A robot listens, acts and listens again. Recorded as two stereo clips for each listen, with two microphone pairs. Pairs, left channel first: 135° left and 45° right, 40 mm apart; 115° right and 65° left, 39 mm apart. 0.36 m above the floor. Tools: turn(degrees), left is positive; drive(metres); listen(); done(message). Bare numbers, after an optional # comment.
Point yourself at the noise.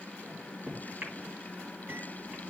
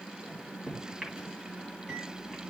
# The microwave: 15° right.
turn(-15)
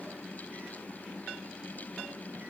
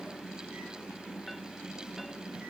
listen()
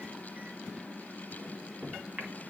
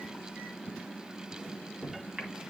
done("Found it: a microwave, straight ahead, 2 to 4 m away.")